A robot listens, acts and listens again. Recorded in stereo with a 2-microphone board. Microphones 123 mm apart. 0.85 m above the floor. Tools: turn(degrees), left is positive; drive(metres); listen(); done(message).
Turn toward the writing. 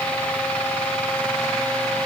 listen()
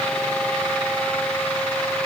listen()
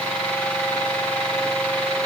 done("I can't make out writing.")